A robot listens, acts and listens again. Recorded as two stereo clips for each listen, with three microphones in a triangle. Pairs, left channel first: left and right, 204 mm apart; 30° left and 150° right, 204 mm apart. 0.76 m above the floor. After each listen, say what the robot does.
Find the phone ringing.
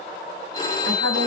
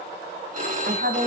Turn 160° left.
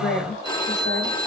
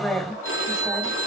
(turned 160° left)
Turn 20° left.
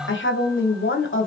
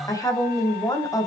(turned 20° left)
Keep listening.
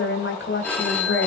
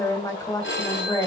Turn 10° left.
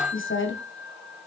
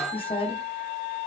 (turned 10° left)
Facing the phone ringing.